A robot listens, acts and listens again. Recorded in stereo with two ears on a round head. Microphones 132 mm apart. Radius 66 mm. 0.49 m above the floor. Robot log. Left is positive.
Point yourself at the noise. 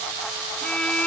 cmd yaw +30
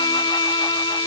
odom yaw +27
note: So it is at 145° left.
cmd yaw +145
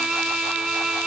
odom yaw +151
end: Found it: a violin, straight ahead.